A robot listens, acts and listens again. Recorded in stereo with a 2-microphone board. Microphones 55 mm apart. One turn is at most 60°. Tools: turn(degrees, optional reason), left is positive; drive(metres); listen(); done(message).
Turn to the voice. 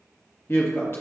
turn(degrees=50, reason="The woman speaking: about 50° left or 130° left.")
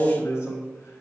turn(degrees=60, reason="So it is at 70° left.")
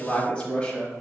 turn(degrees=25, reason="The woman speaking is now 25° left.")
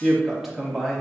done("Facing the woman speaking, under 1 m away.")